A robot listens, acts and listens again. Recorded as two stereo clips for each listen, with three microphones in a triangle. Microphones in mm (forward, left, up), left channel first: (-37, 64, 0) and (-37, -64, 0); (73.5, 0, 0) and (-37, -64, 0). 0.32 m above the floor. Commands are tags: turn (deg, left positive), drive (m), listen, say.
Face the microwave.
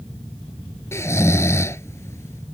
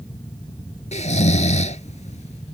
<listen/>
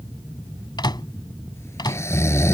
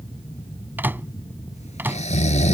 <turn deg="140"/>
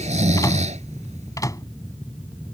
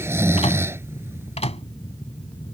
<turn deg="35"/>
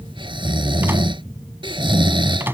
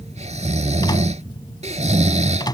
<turn deg="-20"/>
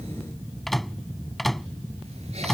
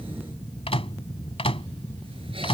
<say>Facing the microwave.</say>